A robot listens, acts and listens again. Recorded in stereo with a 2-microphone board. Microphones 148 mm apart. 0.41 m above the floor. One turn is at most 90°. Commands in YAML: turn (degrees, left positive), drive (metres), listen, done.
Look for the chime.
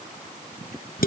listen: true
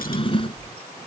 listen: true
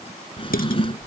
done: "I can't make out a chime, only a drawer."